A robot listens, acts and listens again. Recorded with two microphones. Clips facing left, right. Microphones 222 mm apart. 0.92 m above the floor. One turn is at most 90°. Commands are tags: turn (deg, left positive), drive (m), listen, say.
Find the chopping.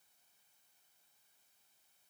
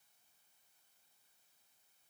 <listen/>
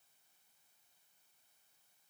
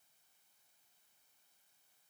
<listen/>
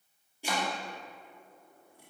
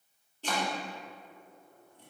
<turn deg="30"/>
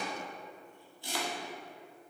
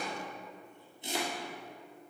<turn deg="-20"/>
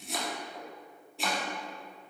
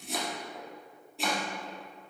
<say>Facing the chopping.</say>